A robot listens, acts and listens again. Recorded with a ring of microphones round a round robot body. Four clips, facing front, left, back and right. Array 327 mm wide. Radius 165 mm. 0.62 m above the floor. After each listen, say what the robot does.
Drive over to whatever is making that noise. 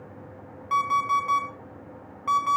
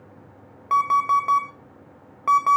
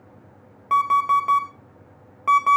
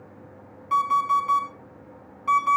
Turn 125° left.
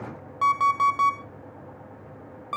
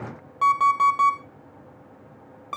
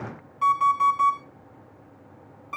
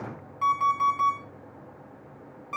Turn 40° left.
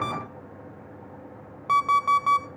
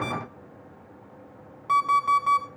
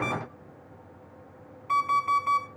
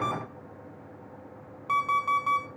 Drive 1.0 m forward.
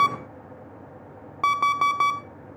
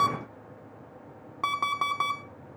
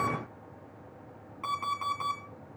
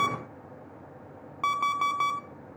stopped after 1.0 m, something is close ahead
Arrived at the alarm clock, straight ahead.